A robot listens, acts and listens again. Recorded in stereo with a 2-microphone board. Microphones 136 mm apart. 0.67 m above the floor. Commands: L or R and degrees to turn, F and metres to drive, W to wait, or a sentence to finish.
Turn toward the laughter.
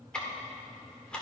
W
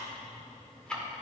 W
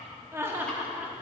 R30
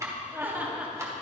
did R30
R30
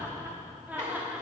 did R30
R30
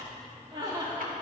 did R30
R155
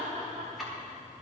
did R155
R40
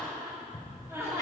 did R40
R20
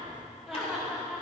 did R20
Facing the laughter, 1 to 2 m away.